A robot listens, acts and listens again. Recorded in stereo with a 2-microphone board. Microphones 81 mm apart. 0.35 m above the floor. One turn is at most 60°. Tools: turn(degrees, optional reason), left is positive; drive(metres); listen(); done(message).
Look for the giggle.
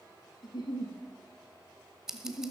turn(degrees=60, reason="The giggle: about 60° left or 120° left.")
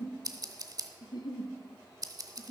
turn(degrees=60, reason="So it is at 60° left.")
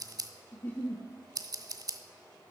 turn(degrees=20, reason="The giggle is now 20° left.")
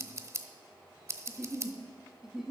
done("Facing the giggle.")